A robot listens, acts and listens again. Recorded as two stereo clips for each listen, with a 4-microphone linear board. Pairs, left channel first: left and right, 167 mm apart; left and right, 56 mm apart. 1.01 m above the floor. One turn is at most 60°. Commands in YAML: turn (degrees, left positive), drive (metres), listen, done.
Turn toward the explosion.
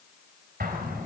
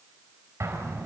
turn: -60
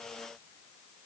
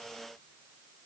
listen: true
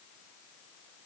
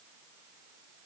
done: "I heard an explosion, but can't make it out now. It was about 5° right or 55° right."